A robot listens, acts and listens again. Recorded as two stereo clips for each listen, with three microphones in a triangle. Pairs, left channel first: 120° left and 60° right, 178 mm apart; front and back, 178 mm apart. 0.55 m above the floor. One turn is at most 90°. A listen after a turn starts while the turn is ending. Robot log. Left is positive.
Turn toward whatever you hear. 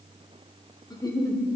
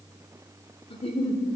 note: The giggle: 55° left.
cmd yaw +55
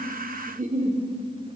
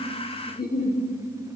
note: The giggle is now 20° right.
cmd yaw -20
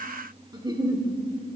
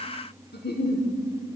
end: Facing the giggle.